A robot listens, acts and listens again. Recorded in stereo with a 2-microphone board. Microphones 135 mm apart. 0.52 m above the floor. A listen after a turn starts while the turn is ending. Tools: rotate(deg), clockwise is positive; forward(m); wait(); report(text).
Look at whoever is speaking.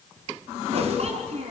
rotate(50)
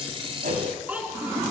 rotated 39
rotate(10)
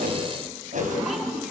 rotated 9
wait()
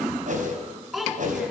report("Found it: a child speaking, straight ahead.")